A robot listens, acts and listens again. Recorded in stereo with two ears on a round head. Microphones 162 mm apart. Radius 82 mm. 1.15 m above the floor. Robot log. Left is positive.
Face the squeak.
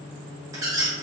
note: The squeak: about 20° right or 160° right.
cmd yaw -20
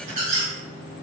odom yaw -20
note: So it is at 140° right.
cmd yaw -140
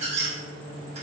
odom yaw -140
note: The squeak is now 40° right.
cmd yaw -40
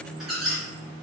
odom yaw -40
end: Facing the squeak, under 1 m away.